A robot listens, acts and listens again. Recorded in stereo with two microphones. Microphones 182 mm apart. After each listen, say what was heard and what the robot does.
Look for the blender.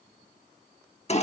Keep listening.
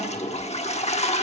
Keep listening.
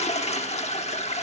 I can't make out a blender, only a toilet flushing.